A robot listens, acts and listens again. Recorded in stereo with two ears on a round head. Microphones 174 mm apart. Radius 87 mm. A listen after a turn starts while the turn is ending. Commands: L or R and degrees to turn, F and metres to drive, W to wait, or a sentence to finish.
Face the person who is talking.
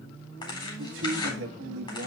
R65
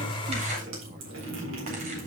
W
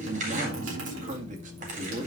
R40
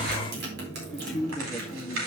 Facing the man speaking.